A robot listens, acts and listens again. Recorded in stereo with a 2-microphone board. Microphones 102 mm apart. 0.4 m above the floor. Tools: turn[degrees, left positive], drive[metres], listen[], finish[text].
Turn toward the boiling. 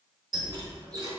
Action: listen[]
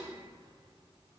Action: listen[]
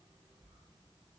Action: finish[I can't make out boiling, only a squeak.]